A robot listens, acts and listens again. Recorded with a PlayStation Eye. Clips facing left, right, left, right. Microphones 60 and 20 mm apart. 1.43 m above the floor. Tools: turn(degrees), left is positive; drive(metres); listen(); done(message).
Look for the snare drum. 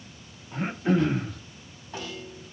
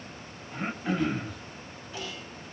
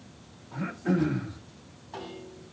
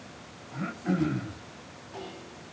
turn(degrees=35)
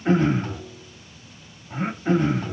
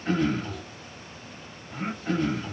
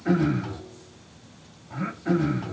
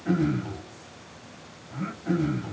listen()
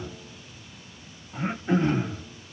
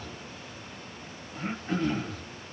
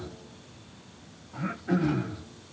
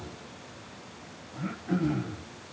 listen()
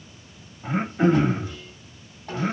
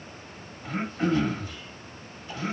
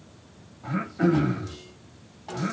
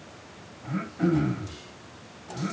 turn(degrees=115)
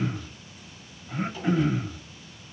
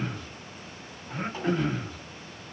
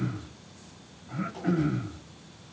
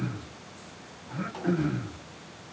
turn(degrees=-35)
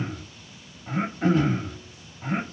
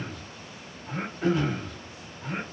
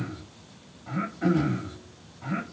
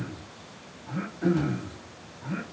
listen()
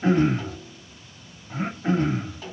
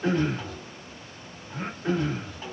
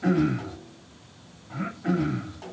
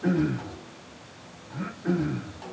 done("Found it: a snare drum, straight ahead.")